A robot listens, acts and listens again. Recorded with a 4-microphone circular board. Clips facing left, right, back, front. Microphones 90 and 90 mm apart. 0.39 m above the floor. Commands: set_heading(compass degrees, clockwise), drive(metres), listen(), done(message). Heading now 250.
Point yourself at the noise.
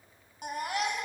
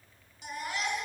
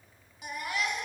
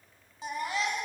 set_heading(190)
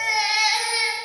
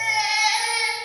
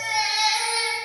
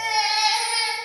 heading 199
done("Facing the baby crying, 2 to 4 m away.")